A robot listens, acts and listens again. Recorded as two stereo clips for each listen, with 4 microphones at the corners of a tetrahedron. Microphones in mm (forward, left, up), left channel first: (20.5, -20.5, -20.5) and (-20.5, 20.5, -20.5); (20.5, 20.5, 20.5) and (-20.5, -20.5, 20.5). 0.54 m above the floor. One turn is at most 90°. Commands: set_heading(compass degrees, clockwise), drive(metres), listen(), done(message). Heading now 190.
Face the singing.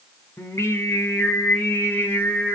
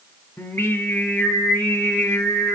set_heading(175)
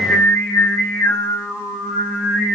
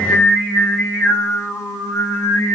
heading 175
set_heading(150)
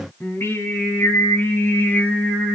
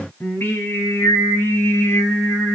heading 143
set_heading(133)
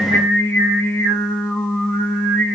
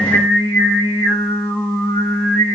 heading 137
done("Found it: singing, straight ahead.")